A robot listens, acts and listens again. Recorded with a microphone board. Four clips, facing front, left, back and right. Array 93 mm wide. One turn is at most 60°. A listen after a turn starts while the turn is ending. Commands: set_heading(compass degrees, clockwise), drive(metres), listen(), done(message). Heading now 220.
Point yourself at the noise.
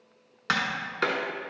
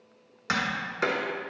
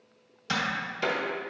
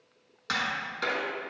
set_heading(205)
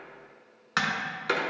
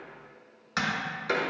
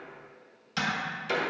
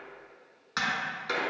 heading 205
done("Found it: tapping, straight ahead.")